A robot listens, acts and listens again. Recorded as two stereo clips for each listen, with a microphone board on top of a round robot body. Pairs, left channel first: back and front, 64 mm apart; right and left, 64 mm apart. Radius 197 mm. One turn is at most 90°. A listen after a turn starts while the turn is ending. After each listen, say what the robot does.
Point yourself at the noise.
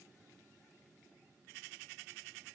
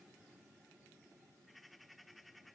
Keep listening.
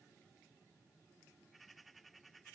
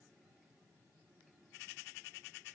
Keep listening.
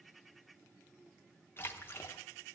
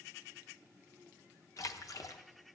Turn 90° right.
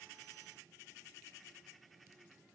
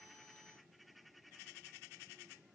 Turn 35° right.
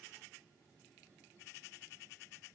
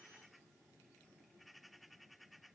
Facing where the splash came from. I can't hear it now.